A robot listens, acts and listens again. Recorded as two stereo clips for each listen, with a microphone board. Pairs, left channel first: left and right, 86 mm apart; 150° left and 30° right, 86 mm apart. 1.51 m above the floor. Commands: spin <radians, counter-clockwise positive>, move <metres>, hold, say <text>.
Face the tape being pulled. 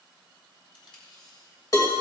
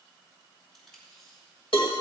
spin 1.13
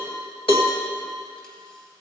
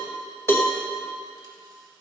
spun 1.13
hold
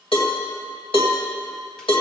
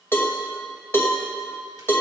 hold
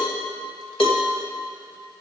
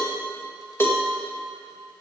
say Facing where the tape being pulled came from. I can't hear it now.